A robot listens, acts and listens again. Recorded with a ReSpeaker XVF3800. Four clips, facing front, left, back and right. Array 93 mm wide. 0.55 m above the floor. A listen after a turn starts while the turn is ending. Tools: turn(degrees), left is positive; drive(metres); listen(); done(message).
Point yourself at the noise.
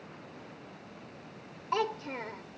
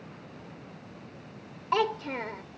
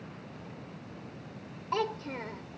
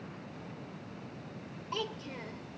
turn(degrees=85)
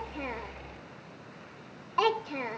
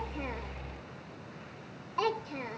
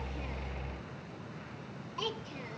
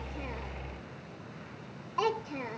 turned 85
done("Found it: a child speaking, straight ahead.")